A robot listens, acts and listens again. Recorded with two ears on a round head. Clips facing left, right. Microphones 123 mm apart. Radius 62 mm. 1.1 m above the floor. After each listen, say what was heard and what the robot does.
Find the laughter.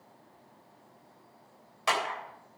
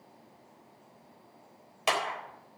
Keep listening.
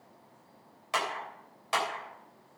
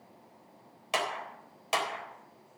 Keep listening.
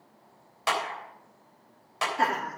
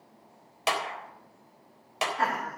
The laughter: about 40° left or 140° left. Turn 40° left.
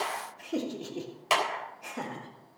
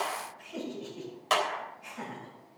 So it is at 105° left. Turn 105° left.
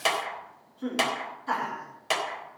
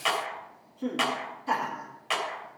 The laughter is now 15° right. Turn 15° right.
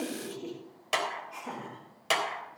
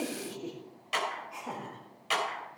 Found it: laughter, straight ahead, 2 to 4 m away.